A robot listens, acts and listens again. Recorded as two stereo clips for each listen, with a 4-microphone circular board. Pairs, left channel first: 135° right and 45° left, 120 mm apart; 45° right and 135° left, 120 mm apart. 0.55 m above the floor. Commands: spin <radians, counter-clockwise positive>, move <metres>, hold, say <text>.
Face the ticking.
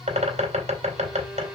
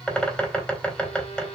hold
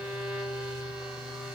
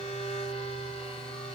hold
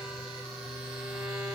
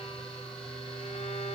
say I can't make out ticking to turn to.